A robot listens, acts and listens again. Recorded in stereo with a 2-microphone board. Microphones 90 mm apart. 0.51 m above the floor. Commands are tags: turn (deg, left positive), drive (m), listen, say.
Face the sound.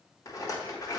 <turn deg="40"/>
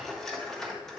<say>Facing the rattle, 1 to 2 m away.</say>